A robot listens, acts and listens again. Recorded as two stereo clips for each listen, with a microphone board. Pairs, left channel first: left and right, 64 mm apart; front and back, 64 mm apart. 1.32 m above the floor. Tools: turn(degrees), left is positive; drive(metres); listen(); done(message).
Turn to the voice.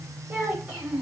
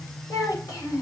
turn(degrees=-25)
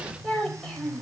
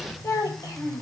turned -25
turn(degrees=10)
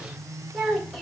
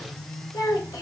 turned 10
done("Facing the child speaking.")